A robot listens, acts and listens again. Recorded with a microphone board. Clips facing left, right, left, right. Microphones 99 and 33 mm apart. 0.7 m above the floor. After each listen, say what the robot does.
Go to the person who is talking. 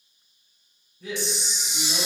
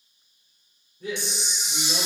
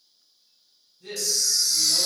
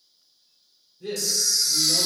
Turn 25° right.
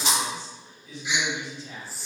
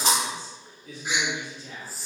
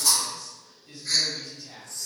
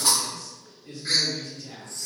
Turn 130° right.
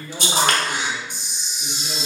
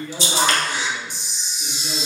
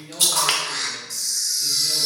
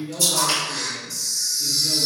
Turn 10° right.
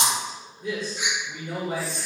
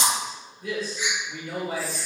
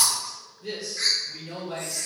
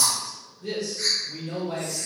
Drive 1.0 m forward.
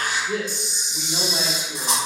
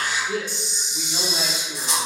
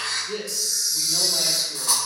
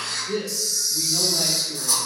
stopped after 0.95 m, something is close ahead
Arrived at the man speaking, straight ahead.